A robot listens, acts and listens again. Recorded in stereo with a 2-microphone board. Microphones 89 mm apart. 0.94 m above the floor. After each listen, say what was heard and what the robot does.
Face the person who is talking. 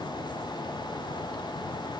Keep listening.
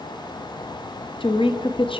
The woman speaking: about 75° left or 105° left. Turn 75° left.
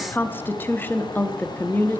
So it is at 25° left. Turn 25° left.
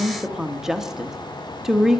Found it: a woman speaking, straight ahead, 1 to 2 m away.